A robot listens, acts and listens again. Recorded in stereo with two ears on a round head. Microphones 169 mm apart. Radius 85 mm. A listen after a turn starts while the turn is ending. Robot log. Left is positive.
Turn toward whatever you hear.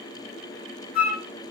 note: The flute: about 25° left or 155° left.
cmd yaw +25
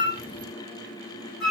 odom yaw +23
end: Found it: a flute, straight ahead, 1 to 2 m away.